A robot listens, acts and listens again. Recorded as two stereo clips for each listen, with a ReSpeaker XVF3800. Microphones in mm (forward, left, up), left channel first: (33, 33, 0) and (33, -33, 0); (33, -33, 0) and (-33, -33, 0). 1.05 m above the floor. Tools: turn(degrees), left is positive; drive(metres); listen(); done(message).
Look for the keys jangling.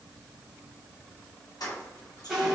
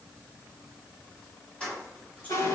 turn(degrees=75)
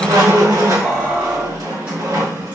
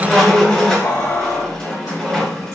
turn(degrees=-20)
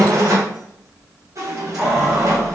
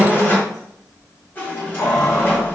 turn(degrees=-15)
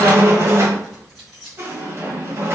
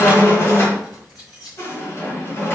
done("Facing the keys jangling.")